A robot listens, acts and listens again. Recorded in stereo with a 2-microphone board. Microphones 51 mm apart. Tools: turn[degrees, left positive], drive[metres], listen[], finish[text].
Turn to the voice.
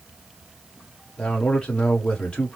Thought: The man speaking: about 20° left or 160° left.
Action: turn[20]
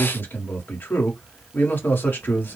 Thought: So it is at 140° left.
Action: turn[140]
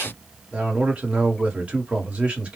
Thought: The man speaking is now 25° right.
Action: turn[-25]
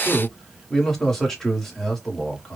Action: finish[Facing the man speaking, 1 to 2 m away.]